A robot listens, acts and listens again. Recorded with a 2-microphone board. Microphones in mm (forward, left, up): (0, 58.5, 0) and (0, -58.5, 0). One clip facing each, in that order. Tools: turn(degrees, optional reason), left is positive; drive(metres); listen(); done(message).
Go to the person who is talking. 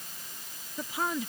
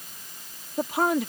turn(degrees=-65, reason="The woman speaking: about 65° right or 115° right.")
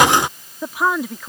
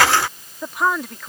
drive(metres=1.0)
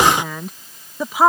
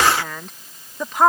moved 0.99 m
drive(metres=1.0)
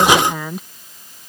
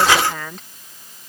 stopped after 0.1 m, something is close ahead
turn(degrees=10, reason="The woman speaking is now 10° left.")
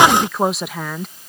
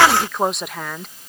done("Arrived at the woman speaking, straight ahead.")